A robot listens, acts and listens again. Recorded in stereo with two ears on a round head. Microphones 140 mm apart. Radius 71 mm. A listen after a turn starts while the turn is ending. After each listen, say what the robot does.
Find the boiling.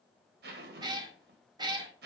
Keep listening.
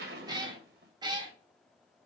Keep listening.
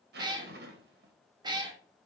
I can't make out boiling, only a cat meowing and a zipper.